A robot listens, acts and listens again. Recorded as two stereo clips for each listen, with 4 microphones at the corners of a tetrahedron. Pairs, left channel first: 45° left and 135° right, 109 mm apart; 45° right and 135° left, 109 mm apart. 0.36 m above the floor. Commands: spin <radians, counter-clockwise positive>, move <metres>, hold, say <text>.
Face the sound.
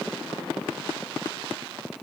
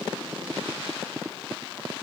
hold
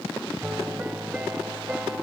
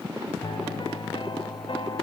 spin -1.05
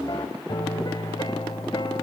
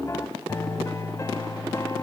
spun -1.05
spin 0.17
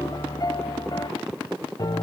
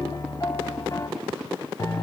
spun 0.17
say Found it: a piano, straight ahead.